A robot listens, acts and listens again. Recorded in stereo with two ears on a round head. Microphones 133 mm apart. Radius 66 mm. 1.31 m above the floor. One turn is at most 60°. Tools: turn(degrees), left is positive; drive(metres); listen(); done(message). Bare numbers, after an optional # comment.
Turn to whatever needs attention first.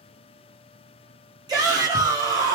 # The shout: about 25° right or 155° right.
turn(-25)
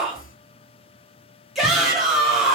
done("Facing the shout.")